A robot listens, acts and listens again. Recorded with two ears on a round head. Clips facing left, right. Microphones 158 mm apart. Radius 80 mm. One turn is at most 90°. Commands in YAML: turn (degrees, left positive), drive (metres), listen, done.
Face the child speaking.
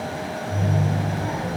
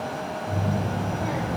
turn: -70
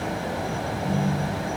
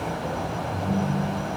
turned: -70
turn: -30
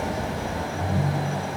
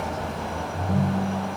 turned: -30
turn: 10
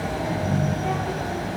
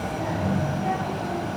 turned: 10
done: "Facing the child speaking, 2 to 4 m away."